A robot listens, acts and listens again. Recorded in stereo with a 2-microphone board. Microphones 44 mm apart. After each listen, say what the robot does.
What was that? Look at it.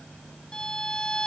Turn 20° left.
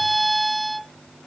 Facing the violin.